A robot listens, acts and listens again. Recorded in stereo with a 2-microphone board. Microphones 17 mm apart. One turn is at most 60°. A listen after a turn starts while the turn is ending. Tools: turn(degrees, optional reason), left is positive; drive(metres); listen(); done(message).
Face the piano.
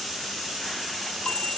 listen()
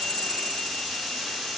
listen()
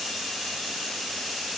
done("I can't make out a piano, only a chime.")